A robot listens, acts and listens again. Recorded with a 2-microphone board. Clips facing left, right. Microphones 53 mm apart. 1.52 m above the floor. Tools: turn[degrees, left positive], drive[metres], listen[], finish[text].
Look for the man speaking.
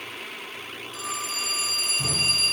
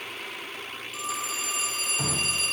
Action: listen[]
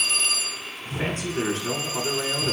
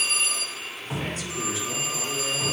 Thought: The man speaking: about 50° left or 130° left.
Action: turn[50]
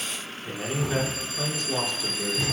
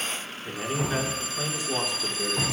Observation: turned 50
Thought: So it is at 10° right.
Action: turn[-10]
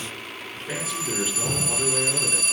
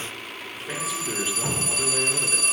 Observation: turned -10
Action: finish[Facing the man speaking.]